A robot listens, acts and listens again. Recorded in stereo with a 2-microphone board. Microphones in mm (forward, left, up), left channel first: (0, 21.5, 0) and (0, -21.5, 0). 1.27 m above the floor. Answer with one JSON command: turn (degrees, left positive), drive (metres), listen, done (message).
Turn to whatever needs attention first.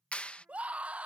{"turn": -30}
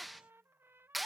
{"listen": true}
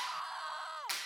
{"done": "Facing the scream."}